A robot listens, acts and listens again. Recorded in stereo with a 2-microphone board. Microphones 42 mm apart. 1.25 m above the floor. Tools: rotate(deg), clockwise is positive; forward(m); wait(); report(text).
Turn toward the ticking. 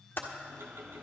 rotate(65)
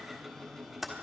report("Found it: ticking, straight ahead.")